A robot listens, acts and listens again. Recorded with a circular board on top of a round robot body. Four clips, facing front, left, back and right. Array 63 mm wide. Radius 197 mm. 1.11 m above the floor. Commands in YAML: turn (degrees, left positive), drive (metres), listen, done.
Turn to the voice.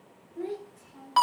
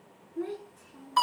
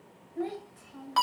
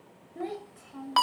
turn: -110
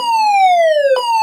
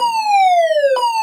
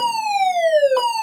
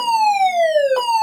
listen: true
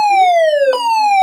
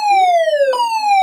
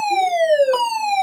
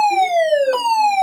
listen: true
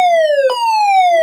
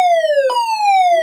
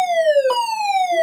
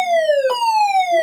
done: "Facing where the child speaking came from. I can't hear it now."